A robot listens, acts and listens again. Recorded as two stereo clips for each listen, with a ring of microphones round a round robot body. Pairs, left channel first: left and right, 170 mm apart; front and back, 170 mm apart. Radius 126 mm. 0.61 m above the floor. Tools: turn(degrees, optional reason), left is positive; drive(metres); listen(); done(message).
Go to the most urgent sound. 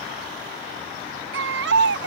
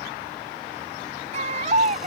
turn(degrees=-115, reason="The baby crying: 115° right.")
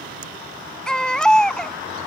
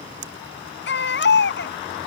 drive(metres=1.0)
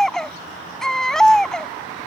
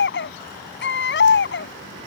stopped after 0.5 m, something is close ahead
done("Blocked. The baby crying is further on, straight ahead.")